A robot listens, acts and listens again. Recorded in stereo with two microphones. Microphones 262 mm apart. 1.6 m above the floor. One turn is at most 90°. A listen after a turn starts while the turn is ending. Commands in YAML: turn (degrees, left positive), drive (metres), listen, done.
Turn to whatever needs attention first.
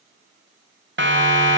turn: -45
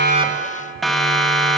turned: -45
done: "Found it: a siren, straight ahead, 2 to 4 m away."